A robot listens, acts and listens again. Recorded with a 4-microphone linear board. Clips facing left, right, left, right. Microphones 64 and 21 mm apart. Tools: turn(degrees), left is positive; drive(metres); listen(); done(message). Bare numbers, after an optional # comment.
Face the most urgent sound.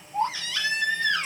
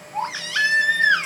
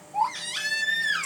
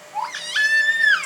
turn(-90)
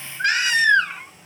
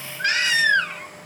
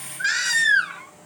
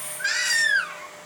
done("Found it: a baby crying, straight ahead, 2 to 4 m away.")